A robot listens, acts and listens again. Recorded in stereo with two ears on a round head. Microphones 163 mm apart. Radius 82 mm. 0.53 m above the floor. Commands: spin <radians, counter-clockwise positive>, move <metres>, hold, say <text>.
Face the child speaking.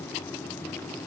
hold
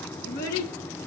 spin 0.96
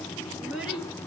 say Found it: a child speaking, straight ahead, over 4 m away.